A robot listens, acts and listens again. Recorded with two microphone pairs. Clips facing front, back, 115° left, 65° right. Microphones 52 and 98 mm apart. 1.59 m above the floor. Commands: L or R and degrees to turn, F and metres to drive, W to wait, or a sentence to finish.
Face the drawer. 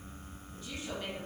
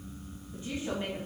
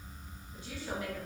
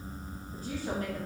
W
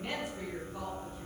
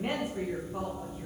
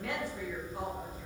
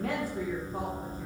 W
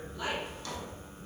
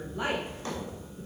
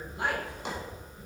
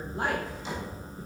L130
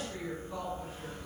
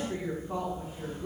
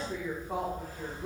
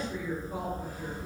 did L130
W
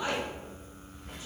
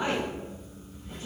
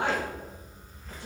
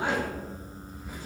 W
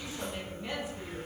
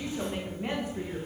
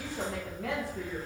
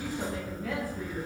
Facing where the drawer came from. I can't hear it now.